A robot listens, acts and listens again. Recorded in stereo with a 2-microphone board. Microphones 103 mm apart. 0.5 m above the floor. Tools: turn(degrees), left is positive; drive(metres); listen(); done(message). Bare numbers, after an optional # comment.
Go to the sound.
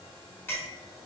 # The clink: about 20° left or 160° left.
turn(20)
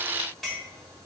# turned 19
drive(1.0)
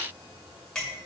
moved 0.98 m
drive(1.0)
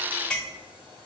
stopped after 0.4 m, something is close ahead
# The clink is now 10° left.
turn(10)
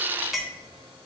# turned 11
done("I am next to the clink.")